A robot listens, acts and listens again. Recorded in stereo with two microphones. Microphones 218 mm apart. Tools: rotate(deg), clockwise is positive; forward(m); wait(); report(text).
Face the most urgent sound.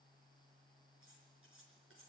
wait()
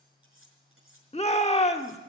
rotate(-30)
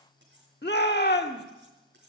rotate(-115)
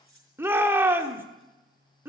rotate(10)
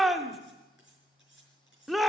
report("Found it: a shout, straight ahead, 1 to 2 m away.")